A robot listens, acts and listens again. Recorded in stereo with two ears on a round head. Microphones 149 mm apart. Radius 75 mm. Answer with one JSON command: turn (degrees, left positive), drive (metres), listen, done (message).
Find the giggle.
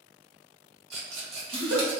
{"turn": -90}
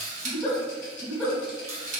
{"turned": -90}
{"done": "Facing the giggle, 1 to 2 m away."}